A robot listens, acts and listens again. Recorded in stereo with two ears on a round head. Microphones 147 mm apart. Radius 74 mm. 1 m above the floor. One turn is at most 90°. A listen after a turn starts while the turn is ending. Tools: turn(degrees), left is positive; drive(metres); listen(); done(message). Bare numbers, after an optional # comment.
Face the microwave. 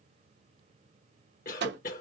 turn(-90)
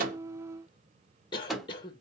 done("Found it: a microwave, straight ahead.")